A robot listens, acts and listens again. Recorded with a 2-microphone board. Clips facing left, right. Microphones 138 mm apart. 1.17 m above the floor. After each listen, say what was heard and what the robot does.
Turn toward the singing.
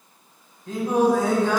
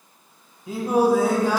Turn 30° right.
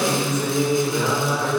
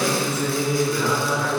So it is at 20° left. Turn 20° left.
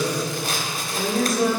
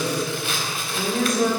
Facing the singing, over 4 m away.